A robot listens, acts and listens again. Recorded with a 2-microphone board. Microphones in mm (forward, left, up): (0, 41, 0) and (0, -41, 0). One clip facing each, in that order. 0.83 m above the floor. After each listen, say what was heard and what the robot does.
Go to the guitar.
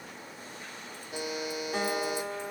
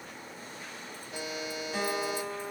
The guitar: about 45° left or 135° left. Turn 45° left.
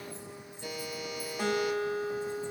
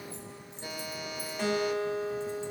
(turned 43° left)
Drive 1.0 m forward.
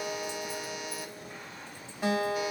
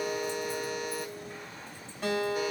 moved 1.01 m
The guitar is now 15° left. Turn 15° left.
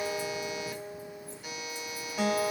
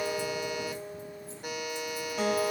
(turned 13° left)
Drive 1.0 m forward.
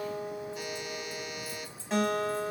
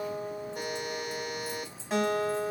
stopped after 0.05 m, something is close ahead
Arrived at the guitar, straight ahead.